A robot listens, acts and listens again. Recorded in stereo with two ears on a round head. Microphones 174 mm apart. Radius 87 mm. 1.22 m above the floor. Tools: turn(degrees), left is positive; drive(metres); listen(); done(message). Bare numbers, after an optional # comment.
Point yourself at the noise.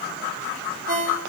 # The ringtone: about 45° right or 135° right.
turn(-45)
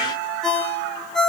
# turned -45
done("Found it: a ringtone, straight ahead.")